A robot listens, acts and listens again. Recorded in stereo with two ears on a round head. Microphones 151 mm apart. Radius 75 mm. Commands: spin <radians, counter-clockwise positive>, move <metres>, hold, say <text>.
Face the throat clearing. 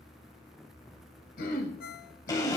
spin 0.96
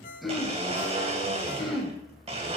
say Found it: throat clearing, straight ahead, 2 to 4 m away.